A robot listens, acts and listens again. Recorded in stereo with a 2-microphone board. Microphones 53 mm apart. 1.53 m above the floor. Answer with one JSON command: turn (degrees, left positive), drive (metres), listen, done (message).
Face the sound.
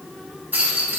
{"turn": -35}
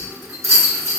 {"turn": -110}
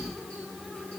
{"listen": true}
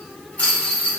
{"turn": 30}
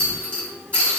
{"turn": 25}
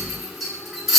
{"done": "Found it: a rattle, straight ahead."}